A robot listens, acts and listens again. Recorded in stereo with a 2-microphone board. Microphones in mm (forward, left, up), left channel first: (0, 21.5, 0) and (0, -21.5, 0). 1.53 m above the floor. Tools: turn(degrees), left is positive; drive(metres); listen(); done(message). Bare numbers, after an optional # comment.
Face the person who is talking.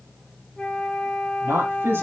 # The man speaking: about 60° right or 120° right.
turn(-60)
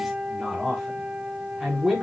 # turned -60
# So it is at 10° right.
turn(-10)
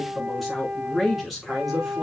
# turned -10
done("Facing the man speaking, over 4 m away.")